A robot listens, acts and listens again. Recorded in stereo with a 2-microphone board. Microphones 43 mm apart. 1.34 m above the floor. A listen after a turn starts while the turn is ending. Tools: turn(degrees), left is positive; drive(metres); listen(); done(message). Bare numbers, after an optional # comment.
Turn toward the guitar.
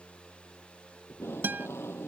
# The guitar: about 55° right or 125° right.
turn(-55)
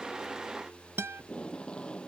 # So it is at 60° right.
turn(-60)
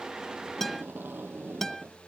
# The guitar is now 10° left.
turn(10)
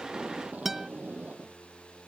done("Facing the guitar.")